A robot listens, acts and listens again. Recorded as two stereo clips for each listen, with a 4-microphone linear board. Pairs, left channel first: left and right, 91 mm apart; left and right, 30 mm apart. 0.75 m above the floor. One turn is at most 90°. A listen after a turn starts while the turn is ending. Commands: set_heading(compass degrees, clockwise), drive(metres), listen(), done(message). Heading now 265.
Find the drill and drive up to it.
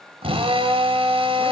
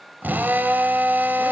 set_heading(355)
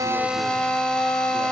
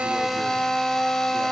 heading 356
set_heading(346)
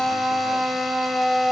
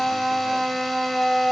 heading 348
drive(1.0)
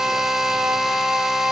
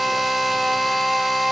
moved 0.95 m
drive(1.0)
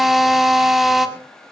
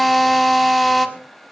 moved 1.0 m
drive(1.0)
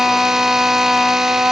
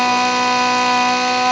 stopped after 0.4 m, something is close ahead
done("I am next to the drill.")